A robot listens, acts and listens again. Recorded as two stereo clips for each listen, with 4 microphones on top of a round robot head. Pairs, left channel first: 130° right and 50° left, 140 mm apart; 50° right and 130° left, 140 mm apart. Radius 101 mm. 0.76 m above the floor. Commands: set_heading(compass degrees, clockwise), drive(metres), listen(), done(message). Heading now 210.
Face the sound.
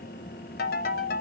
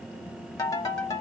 set_heading(330)
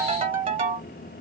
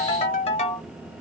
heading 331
done("Found it: a ringtone, straight ahead, 1 to 2 m away.")